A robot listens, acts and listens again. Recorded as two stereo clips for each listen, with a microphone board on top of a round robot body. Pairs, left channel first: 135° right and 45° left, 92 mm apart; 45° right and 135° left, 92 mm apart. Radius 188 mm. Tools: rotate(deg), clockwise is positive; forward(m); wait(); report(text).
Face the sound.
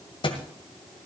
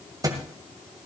rotate(170)
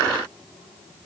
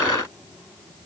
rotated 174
report("Facing where the thud came from. I can't hear it now.")